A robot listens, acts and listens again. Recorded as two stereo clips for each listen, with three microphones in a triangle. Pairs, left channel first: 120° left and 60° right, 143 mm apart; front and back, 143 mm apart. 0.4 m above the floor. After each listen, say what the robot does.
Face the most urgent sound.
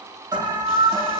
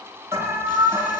Turn 110° right.
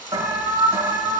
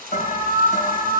Facing the alarm.